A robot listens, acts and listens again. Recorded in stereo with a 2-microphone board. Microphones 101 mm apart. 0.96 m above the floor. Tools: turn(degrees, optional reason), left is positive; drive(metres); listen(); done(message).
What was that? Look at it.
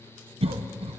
turn(degrees=-70, reason="The cough: about 70° right or 110° right.")
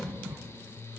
turn(degrees=-25, reason="So it is at 25° right.")
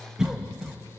done("Found it: a cough, straight ahead, under 1 m away.")